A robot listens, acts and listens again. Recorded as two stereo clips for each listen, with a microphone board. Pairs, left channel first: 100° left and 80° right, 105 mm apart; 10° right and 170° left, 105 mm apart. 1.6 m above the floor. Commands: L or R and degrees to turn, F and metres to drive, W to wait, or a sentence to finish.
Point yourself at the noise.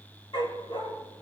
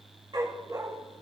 L130
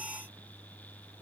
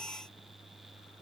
W
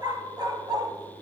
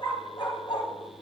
R40
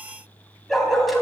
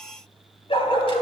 L10
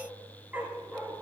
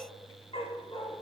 Found it: a dog barking, straight ahead.